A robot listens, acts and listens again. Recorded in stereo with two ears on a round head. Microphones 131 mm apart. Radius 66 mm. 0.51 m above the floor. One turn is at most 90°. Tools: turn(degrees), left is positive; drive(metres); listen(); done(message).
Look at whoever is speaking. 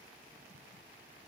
listen()
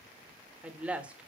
turn(degrees=-30)
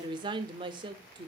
turn(degrees=-90)
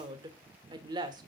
turn(degrees=-35)
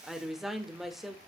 done("Found it: a woman speaking, straight ahead, 1 to 2 m away.")